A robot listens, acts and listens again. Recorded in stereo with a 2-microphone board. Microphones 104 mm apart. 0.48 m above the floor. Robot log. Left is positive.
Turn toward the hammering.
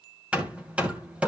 cmd yaw -30
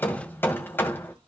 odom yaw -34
note: So it is at 20° left.
cmd yaw +20
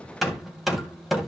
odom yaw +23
end: Found it: hammering, straight ahead, 2 to 4 m away.